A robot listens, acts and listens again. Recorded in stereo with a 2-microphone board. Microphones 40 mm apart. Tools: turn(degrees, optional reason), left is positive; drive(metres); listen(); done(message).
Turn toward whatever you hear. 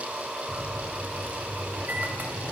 turn(degrees=-50, reason="The microwave: about 50° right or 130° right.")
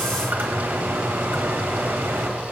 turn(degrees=-75, reason="So it is at 75° right.")
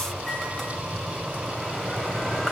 turn(degrees=10, reason="The microwave is now 10° left.")
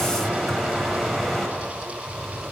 done("Found it: a microwave, straight ahead, 2 to 4 m away.")